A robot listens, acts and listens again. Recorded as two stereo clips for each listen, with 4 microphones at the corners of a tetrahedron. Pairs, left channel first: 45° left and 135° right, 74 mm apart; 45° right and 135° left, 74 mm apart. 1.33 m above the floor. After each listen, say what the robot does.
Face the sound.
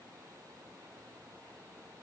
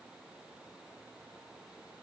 Keep listening.
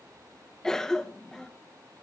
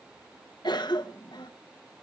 Turn 35° right.
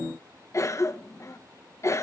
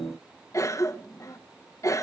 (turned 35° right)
Facing the cough, 1 to 2 m away.